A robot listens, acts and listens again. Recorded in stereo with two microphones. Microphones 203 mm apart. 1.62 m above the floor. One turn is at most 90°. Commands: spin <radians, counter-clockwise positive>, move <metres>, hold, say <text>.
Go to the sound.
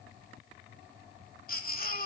spin 0.79
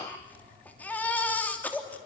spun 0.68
spin 0.17
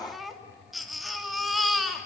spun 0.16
move 1.0
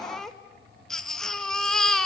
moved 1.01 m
move 1.0
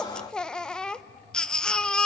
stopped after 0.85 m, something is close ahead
say I am next to the baby crying.